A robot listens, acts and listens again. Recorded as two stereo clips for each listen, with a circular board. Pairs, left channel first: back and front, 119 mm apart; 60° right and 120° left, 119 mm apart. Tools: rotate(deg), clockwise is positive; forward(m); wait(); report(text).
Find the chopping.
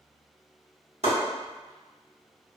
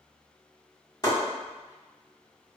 report("Facing the chopping.")